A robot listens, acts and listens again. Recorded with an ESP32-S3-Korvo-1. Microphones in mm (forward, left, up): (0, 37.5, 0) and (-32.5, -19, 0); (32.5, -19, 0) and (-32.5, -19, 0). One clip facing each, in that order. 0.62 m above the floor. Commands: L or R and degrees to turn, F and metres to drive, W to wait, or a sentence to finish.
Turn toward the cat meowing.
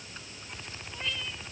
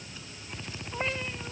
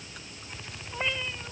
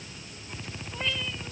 R65
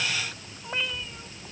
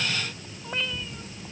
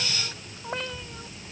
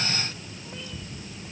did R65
R25
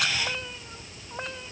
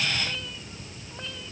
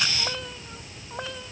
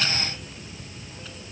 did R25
Facing the cat meowing.